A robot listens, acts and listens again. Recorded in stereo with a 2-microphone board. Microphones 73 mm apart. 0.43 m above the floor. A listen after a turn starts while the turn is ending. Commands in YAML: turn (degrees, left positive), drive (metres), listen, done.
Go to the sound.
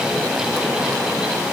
listen: true
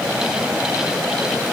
listen: true
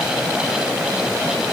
done: "I can't make out anything to turn to."